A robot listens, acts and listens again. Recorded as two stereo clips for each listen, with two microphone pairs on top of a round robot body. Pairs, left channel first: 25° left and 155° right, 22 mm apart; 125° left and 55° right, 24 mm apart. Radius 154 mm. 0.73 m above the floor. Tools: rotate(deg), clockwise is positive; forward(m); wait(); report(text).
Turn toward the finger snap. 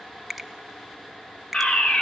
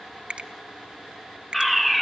rotate(60)
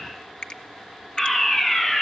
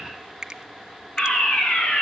report("Facing the finger snap, 2 to 4 m away.")